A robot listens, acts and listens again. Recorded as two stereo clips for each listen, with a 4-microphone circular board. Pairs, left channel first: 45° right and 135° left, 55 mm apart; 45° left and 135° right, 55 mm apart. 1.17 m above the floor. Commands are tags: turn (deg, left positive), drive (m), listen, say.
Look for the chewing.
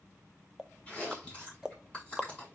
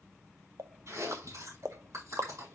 <turn deg="-115"/>
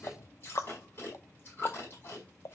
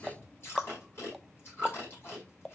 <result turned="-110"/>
<say>Found it: chewing, straight ahead, over 4 m away.</say>